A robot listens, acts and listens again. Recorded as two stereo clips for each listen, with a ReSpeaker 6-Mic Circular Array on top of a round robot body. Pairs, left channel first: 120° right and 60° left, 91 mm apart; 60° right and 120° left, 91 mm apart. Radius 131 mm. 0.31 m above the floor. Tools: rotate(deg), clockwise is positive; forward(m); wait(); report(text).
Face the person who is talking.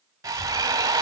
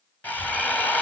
rotate(25)
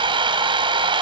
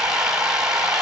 wait()
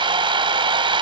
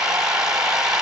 wait()
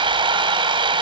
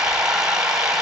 report("I heard a child speaking from this way, but can't make it out now.")